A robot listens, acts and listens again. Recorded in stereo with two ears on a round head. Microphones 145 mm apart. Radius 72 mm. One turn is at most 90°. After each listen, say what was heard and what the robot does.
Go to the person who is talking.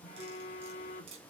Keep listening.
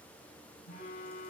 Keep listening.
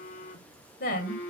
The woman speaking: about 60° left or 120° left. Turn 60° left.
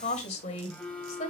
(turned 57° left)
So it is at 50° left. Turn 50° left.
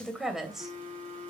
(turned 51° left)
Drive 1.0 m forward.
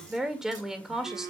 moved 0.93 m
Drive 1.0 m forward.
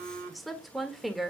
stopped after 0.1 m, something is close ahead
I am next to the woman speaking.